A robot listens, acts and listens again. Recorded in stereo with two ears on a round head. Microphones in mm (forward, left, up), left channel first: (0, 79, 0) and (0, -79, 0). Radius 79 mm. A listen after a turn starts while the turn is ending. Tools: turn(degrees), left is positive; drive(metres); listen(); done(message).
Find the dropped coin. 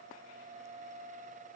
listen()
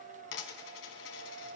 turn(degrees=90)
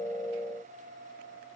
done("I heard a dropped coin from this way, but can't make it out now.")